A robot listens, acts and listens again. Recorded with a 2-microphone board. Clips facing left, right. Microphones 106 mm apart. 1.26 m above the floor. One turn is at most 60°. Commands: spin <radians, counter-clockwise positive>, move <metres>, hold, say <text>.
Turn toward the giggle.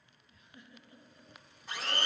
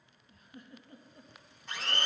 spin -0.79
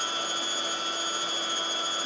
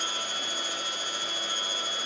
hold
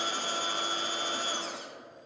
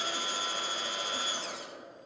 hold
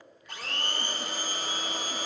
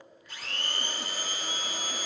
say I heard a giggle, but can't make it out now. It was about straight ahead or 90° right.